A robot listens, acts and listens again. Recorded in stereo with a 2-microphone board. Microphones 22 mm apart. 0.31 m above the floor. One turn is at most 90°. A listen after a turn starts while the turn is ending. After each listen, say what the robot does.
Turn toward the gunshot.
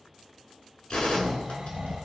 Turn 75° left.
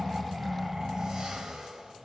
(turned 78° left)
Keep listening.
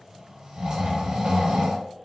I heard a gunshot, but can't make it out now. It was about 5° right or 30° left.